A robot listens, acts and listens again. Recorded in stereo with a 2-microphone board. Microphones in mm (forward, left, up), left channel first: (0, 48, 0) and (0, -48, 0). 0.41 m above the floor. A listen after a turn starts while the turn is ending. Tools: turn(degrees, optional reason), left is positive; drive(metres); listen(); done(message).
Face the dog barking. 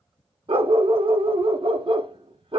turn(degrees=-70, reason="The dog barking: about 70° right or 110° right.")
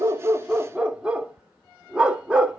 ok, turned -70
turn(degrees=-10, reason="So it is at 10° right.")
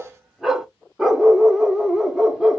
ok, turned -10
done("Found it: a dog barking, straight ahead.")